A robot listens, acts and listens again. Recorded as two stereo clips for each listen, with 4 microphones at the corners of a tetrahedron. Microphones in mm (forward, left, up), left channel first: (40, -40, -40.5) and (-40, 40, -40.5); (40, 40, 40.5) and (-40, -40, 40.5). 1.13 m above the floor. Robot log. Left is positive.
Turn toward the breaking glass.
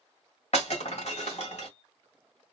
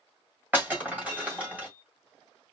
note: The breaking glass: 60° right.
cmd yaw -60
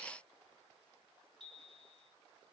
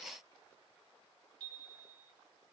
end: Facing where the breaking glass came from. I can't hear it now.